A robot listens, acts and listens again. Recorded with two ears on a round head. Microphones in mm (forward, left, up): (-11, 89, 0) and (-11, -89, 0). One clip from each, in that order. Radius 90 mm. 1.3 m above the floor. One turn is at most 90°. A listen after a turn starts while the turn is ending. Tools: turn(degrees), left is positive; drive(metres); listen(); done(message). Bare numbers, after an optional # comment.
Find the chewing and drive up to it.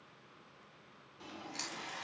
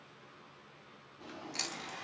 turn(-30)
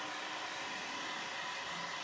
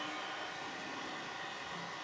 listen()
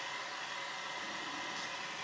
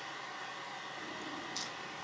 listen()
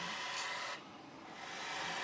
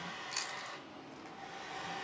done("I heard chewing, but can't make it out now. It was about 15° left or 135° right. I did not reach it.")